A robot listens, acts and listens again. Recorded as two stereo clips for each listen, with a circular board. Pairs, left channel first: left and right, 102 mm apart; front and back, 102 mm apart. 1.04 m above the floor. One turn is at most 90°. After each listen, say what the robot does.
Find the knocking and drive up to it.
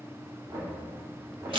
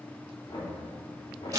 Turn 35° right.
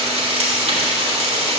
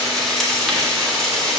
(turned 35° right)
Keep listening.
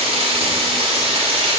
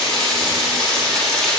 Keep listening.
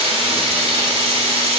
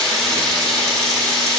I heard knocking from this way, but can't make it out now. I did not reach it.